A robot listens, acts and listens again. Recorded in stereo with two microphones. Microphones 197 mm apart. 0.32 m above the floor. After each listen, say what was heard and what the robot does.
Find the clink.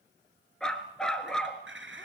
Turn 90° right.
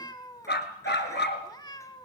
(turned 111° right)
Nothing new. It was at 20° left. Turn 20° left.
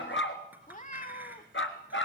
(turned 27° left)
Keep listening.
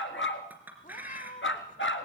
The clink is now 10° right. Turn 10° right.
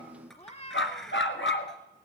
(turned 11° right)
Facing the clink, 2 to 4 m away.